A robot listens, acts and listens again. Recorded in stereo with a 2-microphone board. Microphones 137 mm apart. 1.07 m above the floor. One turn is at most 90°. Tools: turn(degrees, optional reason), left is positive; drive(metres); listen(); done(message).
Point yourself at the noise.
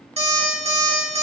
turn(degrees=-50, reason="The alarm clock: about 50° right or 130° right.")
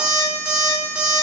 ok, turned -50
done("Facing the alarm clock.")